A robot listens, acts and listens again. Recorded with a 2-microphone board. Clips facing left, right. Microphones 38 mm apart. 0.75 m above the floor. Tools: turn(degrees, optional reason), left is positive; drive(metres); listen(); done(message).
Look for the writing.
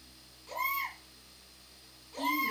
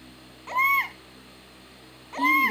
listen()
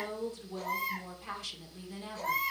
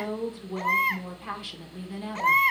listen()
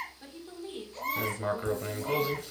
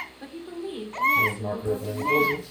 turn(degrees=70, reason="The writing: about 70° left or 110° left.")
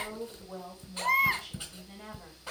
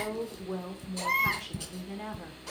turn(degrees=25, reason="So it is at 25° left.")
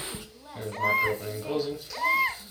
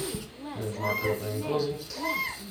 done("Found it: writing, straight ahead.")